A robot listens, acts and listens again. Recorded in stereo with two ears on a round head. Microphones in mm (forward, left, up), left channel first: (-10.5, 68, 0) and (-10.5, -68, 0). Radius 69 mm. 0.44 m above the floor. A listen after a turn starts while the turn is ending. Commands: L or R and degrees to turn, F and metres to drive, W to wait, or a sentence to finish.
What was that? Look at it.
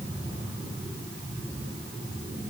W
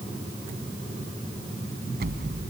R70
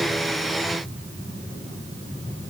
W
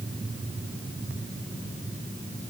I heard an explosion, but can't make it out now. It was about straight ahead or 40° right.